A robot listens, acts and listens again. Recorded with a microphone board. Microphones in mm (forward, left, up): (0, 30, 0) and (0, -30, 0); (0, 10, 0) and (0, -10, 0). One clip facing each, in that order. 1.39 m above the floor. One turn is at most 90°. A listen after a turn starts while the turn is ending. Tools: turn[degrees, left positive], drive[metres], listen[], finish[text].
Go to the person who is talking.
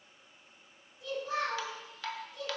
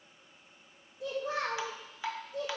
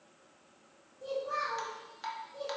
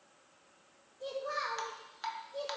Action: turn[-90]
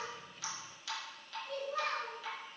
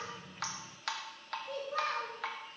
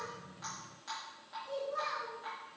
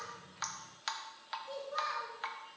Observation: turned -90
Thought: So it is at 10° right.
Action: turn[-10]
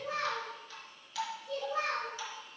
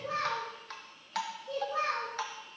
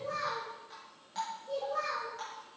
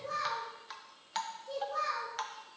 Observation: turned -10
Action: drive[1.0]
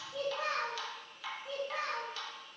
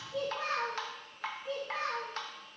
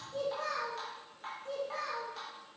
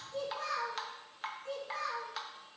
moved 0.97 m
Action: drive[1.0]
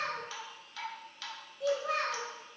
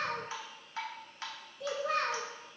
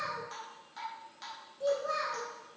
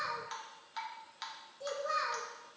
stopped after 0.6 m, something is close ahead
Action: finish[I am next to the child speaking.]